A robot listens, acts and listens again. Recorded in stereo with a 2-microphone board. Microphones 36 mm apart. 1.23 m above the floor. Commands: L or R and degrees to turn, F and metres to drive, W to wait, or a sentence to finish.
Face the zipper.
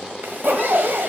R65
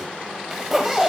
Found it: a zipper, straight ahead.